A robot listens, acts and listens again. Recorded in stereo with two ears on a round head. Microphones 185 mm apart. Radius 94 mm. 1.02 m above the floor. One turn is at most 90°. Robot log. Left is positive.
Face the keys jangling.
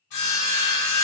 cmd idle
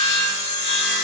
cmd idle
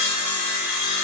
end: I can't make out keys jangling to turn to.